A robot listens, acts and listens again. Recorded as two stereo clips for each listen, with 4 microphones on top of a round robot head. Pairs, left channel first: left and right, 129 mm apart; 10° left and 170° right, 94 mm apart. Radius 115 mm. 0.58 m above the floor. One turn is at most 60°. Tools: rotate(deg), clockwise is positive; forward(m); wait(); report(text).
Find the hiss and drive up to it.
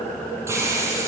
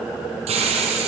rotate(60)
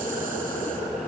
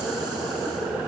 rotate(60)
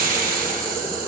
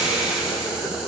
rotate(60)
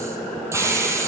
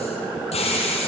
rotate(20)
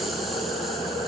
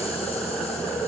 wait()
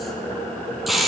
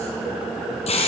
forward(1.0)
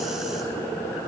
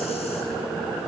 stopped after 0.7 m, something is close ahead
wait()
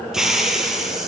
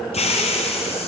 report("Something is in my way. I am facing the hiss but have not reached it.")